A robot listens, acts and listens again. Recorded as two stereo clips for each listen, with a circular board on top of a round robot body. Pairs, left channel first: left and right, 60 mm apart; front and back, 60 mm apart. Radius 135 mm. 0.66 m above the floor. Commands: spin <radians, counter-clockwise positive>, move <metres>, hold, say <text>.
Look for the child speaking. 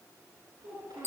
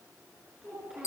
spin -1.66
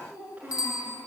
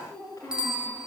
spin -0.52
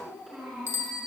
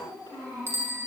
say Facing the child speaking, over 4 m away.